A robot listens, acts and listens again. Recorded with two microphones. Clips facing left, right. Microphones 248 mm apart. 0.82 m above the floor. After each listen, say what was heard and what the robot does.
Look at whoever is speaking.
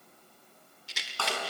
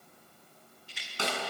Keep listening.
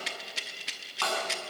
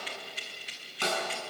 Keep listening.
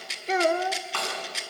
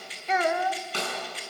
The child speaking: about 35° left or 145° left. Turn 35° left.
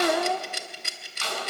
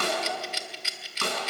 So it is at 105° left. Turn 105° left.
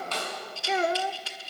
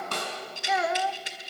The child speaking is now 35° left. Turn 35° left.
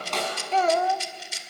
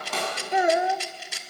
The child speaking is now 15° right. Turn 15° right.
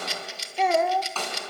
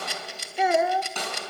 Facing the child speaking, under 1 m away.